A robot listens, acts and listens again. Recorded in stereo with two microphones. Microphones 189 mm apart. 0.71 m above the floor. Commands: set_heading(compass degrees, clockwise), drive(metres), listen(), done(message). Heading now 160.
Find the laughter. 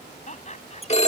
set_heading(120)
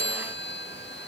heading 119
listen()
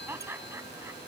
set_heading(134)
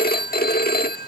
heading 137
listen()
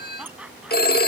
done("Found it: laughter, straight ahead.")